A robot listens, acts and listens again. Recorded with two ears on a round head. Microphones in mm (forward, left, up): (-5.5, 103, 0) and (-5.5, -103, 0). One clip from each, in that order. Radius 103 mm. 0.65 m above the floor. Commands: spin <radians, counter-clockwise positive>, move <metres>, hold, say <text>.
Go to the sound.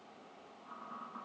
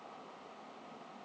hold
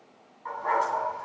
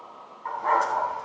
spin -0.52
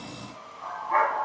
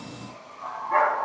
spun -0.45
spin 0.26
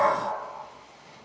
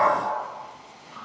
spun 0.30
move 1.0
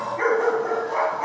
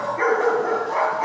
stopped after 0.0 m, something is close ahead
say Blocked. The dog barking is further on, straight ahead.